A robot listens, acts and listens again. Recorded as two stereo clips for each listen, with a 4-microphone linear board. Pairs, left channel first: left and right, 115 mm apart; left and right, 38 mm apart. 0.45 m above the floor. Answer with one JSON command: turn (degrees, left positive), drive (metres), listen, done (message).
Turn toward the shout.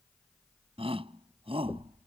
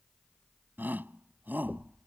{"turn": -55}
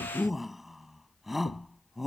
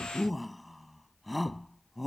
{"done": "Found it: a shout, straight ahead."}